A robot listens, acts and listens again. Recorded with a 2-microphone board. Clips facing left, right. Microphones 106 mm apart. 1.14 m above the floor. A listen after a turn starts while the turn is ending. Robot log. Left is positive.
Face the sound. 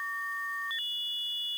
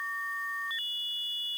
cmd idle
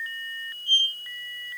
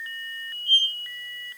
note: The squeak: about 35° right or 145° right.
cmd yaw -35
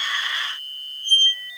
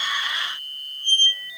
note: So it is at 110° right.
cmd yaw -110
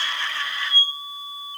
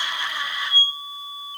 note: The squeak is now 35° right.
cmd yaw -35
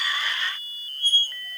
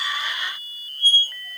end: Facing the squeak, 2 to 4 m away.